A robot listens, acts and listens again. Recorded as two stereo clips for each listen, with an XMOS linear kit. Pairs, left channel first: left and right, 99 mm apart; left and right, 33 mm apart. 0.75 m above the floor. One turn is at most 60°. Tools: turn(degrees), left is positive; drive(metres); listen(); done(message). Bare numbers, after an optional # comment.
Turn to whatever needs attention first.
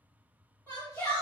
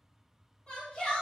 # The shout: about 20° left or 160° left.
turn(20)
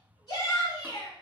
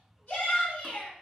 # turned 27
# So it is at 135° left.
turn(60)
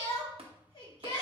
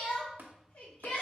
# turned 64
# The shout is now 70° left.
turn(60)
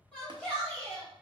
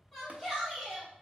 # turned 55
# The shout is now 15° left.
turn(15)
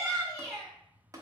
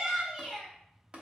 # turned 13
done("Facing the shout, 2 to 4 m away.")